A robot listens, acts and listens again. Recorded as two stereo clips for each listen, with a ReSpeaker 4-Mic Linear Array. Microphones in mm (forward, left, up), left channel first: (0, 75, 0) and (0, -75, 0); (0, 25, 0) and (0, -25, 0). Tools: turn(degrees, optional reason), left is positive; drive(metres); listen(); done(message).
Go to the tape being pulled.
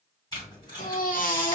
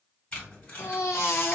turn(degrees=25, reason="The tape being pulled: about 25° left or 155° left.")
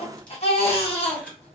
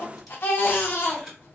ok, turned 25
drive(metres=1.0)
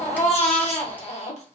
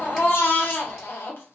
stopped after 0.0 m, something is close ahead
listen()
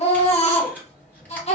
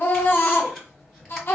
listen()
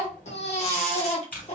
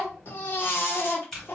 turn(degrees=10, reason="The tape being pulled is now 10° left.")
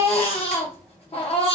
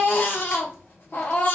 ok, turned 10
listen()
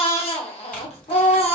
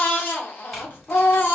listen()
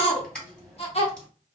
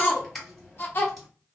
done("Blocked. The tape being pulled is further on, straight ahead.")